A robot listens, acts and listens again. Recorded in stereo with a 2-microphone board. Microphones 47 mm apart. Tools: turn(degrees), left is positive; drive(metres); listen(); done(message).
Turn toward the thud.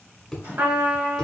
turn(degrees=30)
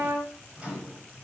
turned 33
listen()
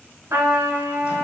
done("I heard a thud, but can't make it out now. It was about 30° right or 145° left.")